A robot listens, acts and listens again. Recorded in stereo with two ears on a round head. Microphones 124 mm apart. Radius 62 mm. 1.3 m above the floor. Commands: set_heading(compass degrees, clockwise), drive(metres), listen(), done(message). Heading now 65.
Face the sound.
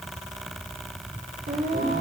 set_heading(135)
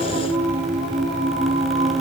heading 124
set_heading(159)
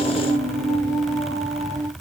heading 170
set_heading(145)
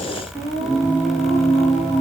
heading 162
set_heading(147)
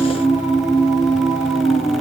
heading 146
done("Found it: singing, straight ahead.")